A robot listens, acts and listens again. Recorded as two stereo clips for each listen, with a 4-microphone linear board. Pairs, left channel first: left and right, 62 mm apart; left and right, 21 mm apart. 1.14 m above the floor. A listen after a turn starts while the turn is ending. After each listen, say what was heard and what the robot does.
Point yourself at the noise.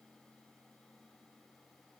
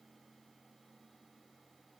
Keep listening.
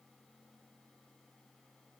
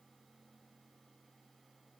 Keep listening.
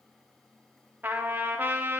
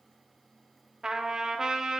The trumpet: about 35° right or 145° right. Turn 35° right.
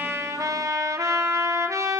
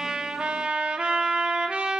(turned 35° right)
So it is at 110° right. Turn 110° right.
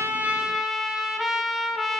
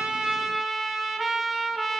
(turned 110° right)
Found it: a trumpet, straight ahead, under 1 m away.